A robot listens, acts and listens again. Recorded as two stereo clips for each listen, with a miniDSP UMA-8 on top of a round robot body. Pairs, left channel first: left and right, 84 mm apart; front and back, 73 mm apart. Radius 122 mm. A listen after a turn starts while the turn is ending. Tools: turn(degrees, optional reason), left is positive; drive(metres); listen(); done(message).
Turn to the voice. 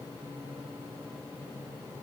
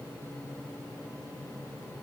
listen()
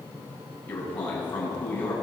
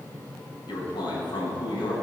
turn(degrees=20, reason="The man speaking: 20° left.")
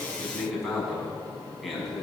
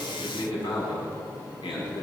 done("Found it: a man speaking, straight ahead.")